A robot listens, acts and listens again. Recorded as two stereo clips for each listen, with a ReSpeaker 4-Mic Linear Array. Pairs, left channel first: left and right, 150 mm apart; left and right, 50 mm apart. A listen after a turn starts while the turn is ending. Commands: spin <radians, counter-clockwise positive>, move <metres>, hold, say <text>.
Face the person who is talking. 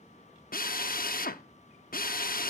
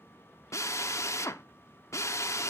hold
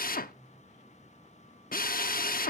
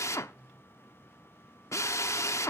hold
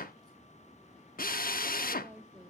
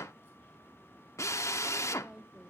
spin -0.52
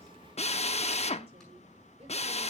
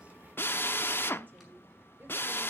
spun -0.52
spin -2.36
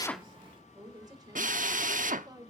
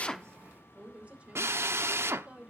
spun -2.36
spin -0.44
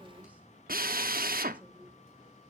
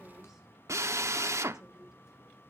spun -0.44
hold
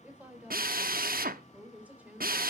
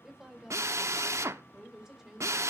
spin -0.17
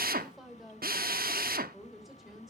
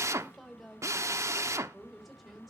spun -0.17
say Facing the woman speaking.